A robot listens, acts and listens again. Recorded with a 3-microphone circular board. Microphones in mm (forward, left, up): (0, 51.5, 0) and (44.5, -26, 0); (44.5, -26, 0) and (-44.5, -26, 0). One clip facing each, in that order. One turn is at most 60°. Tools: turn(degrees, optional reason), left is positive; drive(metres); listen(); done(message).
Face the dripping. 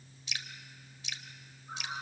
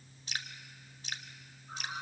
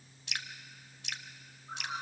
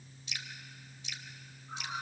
turn(degrees=-15, reason="The dripping: 15° right.")
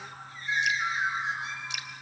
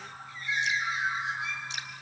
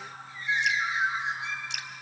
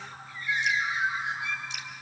done("Facing the dripping, 1 to 2 m away.")